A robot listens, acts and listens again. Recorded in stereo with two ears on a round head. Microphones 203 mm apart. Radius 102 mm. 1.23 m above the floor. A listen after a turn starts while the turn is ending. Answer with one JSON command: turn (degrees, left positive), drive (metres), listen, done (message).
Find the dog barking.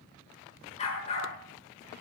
{"turn": 30}
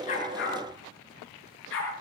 {"turn": 120}
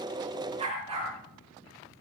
{"turn": -25}
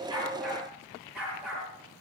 {"done": "Found it: a dog barking, straight ahead."}